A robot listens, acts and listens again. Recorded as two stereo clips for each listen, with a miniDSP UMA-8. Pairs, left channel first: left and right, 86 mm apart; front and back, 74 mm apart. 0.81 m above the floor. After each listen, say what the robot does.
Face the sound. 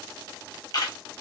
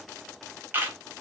Turn 120° left.
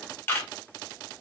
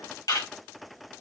Turn 25° left.
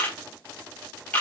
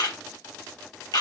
Turn 20° left.
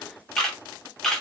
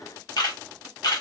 Facing the camera shutter.